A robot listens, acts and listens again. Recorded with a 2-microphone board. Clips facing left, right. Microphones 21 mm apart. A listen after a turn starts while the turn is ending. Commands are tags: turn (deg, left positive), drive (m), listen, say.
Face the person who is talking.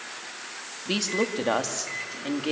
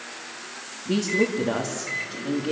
<turn deg="70"/>
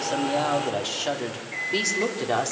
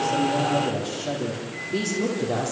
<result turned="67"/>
<turn deg="45"/>
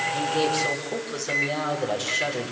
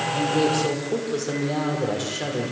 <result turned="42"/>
<say>Found it: a woman speaking, straight ahead.</say>